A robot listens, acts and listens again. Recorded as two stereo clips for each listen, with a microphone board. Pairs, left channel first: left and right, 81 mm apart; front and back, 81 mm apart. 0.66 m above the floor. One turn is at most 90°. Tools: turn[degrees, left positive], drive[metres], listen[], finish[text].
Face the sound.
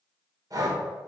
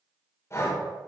Thought: The breathing: 50° right.
Action: turn[-50]
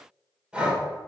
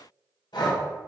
Thought: The breathing is now 10° right.
Action: turn[-10]
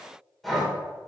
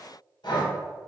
Action: finish[Found it: breathing, straight ahead, 1 to 2 m away.]